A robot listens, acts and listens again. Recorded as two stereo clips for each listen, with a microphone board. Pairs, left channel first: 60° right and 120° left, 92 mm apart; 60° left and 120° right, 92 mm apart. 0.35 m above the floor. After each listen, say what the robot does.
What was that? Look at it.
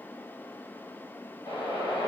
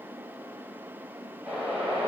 Turn 45° right.
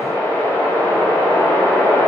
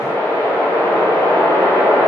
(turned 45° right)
Found it: a whoosh, straight ahead.